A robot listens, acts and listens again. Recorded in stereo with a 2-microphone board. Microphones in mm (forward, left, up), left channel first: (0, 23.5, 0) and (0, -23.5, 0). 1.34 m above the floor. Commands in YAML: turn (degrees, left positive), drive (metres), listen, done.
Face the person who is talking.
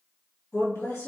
turn: 75
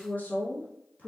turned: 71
turn: 35
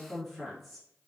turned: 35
done: "Found it: a woman speaking, straight ahead."